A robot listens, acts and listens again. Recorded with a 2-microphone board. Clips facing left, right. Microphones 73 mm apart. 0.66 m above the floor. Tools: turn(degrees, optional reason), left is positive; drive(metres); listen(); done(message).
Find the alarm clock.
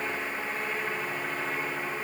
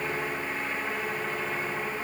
listen()
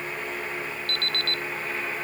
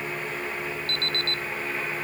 turn(degrees=-30, reason="The alarm clock: about 30° right or 150° right.")
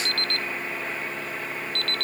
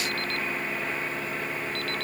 done("Found it: an alarm clock, straight ahead.")